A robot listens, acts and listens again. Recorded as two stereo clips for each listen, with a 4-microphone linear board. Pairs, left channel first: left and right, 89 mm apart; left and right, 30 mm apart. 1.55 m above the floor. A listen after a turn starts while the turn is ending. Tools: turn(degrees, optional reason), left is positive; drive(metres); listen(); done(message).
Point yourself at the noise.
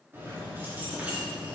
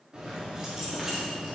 turn(degrees=-30)
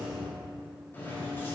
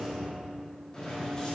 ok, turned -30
turn(degrees=30, reason="So it is at 30° left.")
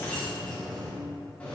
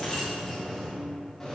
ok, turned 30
turn(degrees=20, reason="The keys jangling is now 20° left.")
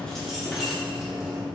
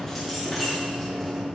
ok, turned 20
done("Facing the keys jangling, 2 to 4 m away.")